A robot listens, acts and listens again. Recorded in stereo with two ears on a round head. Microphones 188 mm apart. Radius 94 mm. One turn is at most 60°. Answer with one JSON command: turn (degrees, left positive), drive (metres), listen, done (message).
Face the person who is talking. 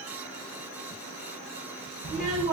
{"turn": -50}
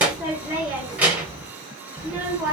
{"turn": -10}
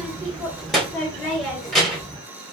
{"done": "Facing the child speaking."}